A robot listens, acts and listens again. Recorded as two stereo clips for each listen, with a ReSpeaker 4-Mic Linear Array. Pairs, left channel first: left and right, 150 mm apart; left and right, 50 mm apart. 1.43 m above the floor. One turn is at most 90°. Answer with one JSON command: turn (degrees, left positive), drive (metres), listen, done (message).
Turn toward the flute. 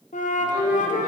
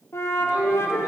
{"turn": 60}
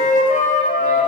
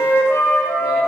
{"turn": 60}
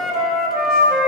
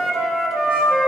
{"done": "Found it: a flute, straight ahead, under 1 m away."}